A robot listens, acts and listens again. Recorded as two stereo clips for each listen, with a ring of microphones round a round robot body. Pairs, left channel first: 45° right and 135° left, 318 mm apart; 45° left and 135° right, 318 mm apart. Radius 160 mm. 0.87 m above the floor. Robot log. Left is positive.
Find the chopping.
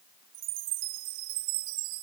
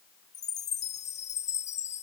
cmd idle
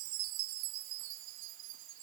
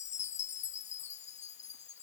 cmd idle
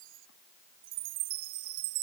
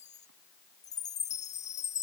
end: I can't make out chopping to turn to.